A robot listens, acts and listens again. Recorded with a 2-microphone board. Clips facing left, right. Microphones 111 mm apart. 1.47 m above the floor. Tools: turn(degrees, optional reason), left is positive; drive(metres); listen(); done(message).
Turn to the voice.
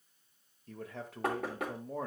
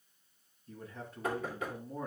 turn(degrees=70, reason="The man speaking: about 70° left or 110° left.")
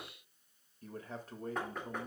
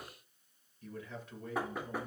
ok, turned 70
turn(degrees=40, reason="So it is at 40° left.")
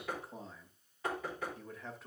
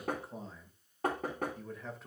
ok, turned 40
done("Facing the man speaking.")